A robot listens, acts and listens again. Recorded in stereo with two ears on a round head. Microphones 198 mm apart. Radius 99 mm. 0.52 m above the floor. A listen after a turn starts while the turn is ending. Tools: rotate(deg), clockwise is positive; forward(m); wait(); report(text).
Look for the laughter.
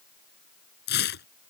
wait()
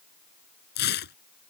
wait()
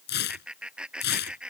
rotate(30)
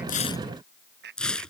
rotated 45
rotate(130)
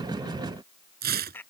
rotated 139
rotate(-10)
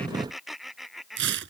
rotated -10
report("Facing the laughter.")